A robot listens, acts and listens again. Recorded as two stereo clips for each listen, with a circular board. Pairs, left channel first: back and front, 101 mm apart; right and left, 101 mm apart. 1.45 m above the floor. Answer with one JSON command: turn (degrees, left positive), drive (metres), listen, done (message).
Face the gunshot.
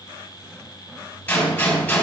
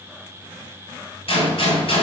{"turn": -105}
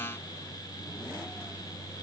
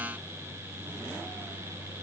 {"done": "Facing where the gunshot came from. I can't hear it now."}